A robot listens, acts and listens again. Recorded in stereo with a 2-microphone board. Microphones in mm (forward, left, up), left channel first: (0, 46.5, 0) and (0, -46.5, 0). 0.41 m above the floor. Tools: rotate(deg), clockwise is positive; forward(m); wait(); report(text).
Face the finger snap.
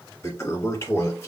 wait()
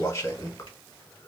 wait()
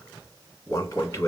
report("I can't make out a finger snap to turn to.")